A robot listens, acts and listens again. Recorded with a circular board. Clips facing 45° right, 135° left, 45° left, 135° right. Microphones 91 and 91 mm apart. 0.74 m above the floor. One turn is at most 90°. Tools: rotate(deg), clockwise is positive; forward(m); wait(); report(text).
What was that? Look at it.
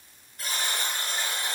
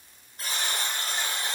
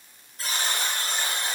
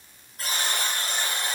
rotate(90)
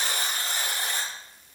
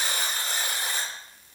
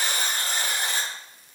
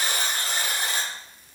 rotate(60)
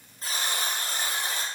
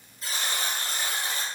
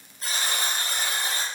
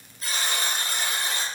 report("Facing the buzzer, 1 to 2 m away.")